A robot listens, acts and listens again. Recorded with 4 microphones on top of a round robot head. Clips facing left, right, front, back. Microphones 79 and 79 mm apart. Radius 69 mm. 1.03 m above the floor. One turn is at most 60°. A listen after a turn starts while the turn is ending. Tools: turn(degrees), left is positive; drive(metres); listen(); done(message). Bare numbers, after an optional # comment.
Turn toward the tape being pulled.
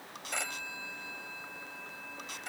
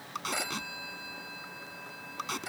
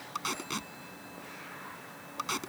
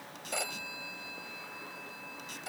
# The tape being pulled: 40° right.
turn(-40)
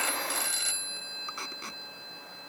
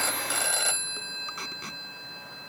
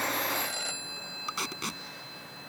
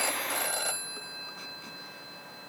done("Found it: tape being pulled, straight ahead.")